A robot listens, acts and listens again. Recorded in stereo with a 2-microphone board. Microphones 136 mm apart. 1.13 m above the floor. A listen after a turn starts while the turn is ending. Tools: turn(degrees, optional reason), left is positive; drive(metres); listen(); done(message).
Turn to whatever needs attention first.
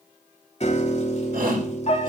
turn(degrees=-90)
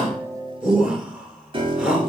done("Found it: a shout, straight ahead.")